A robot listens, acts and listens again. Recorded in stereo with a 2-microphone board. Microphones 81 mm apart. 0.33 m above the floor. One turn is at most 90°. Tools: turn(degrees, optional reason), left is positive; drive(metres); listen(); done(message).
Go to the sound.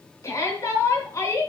turn(degrees=40, reason="The shout: about 40° left or 140° left.")
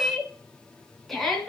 drive(metres=1.0)
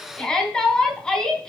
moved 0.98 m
turn(degrees=10, reason="The shout is now 10° left.")
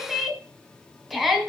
drive(metres=1.0)
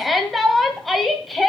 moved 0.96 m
drive(metres=1.0)
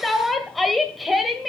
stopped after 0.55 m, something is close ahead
done("I am next to the shout.")